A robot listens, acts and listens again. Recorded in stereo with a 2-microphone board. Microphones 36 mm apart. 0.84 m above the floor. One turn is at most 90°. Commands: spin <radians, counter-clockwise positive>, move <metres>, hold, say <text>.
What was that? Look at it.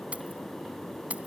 spin -0.70
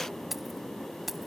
say Facing the keys jangling.